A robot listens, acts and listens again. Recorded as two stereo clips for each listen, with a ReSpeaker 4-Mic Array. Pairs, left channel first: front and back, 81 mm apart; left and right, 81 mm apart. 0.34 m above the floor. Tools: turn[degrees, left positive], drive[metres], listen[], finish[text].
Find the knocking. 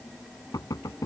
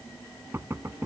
Thought: The knocking: 35° right.
Action: turn[-35]
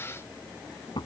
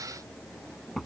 Action: finish[Facing the knocking.]